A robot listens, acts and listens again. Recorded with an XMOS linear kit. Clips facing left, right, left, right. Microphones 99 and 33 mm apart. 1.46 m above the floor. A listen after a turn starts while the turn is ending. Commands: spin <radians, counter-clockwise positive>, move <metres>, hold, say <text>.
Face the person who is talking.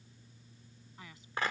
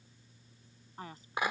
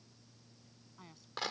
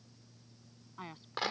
spin -0.70
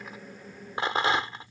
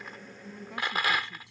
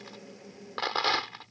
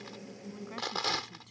hold
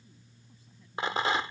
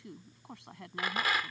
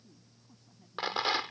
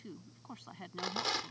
spin -1.66
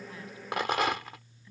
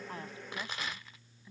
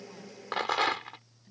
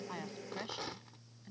spin -0.35
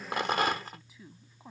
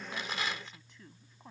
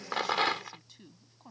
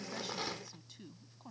say Facing the woman speaking.